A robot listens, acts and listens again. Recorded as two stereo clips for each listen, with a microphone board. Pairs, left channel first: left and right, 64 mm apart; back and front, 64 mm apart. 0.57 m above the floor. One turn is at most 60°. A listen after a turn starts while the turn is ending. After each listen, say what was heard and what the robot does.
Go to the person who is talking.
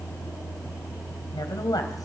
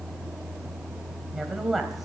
The woman speaking: 85° left. Turn 60° left.
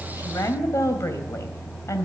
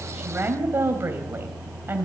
The woman speaking is now 55° left. Turn 55° left.
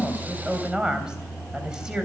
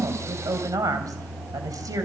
The woman speaking is now 15° right. Turn 15° right.
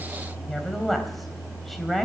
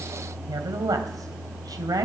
Drive 1.0 m forward.
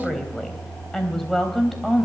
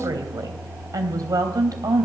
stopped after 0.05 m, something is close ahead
Something is in my way. I am facing the woman speaking but have not reached it.